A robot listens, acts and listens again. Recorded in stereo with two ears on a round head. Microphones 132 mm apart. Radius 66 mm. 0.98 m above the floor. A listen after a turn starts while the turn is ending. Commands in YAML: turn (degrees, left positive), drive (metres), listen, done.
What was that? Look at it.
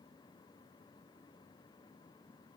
listen: true
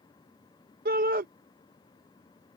turn: -65
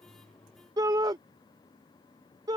turn: -30
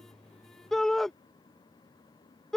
done: "Facing the shout."